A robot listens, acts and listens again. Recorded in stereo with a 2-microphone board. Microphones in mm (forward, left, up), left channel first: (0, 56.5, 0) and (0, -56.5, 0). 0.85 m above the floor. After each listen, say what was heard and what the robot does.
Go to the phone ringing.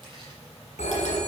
Turn 90° left.
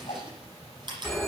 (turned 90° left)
Drive 1.0 m forward.
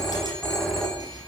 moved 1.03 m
Drive 1.0 m forward.
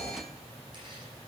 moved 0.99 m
The phone ringing is now 10° left. Turn 10° left.
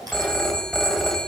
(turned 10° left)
Drive 1.0 m forward.
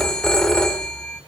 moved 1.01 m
Drive 1.0 m forward.
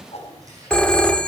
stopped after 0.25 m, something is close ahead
The phone ringing is now 10° left. Turn 10° left.
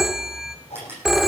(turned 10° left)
I am next to the phone ringing.